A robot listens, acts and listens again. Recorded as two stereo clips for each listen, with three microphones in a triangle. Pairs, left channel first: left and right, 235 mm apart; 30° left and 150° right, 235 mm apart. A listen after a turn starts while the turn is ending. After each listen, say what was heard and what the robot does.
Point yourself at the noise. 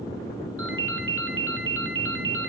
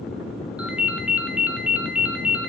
The ringtone: 65° right. Turn 65° right.
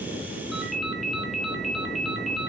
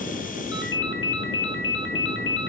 Facing the ringtone.